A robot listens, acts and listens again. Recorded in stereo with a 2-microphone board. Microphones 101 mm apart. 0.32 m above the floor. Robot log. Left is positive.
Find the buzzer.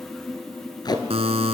note: The buzzer: about 75° right or 105° right.
cmd yaw -75
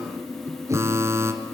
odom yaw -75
note: So it is at 30° right.
cmd yaw -30
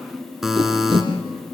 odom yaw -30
end: Found it: a buzzer, straight ahead, 1 to 2 m away.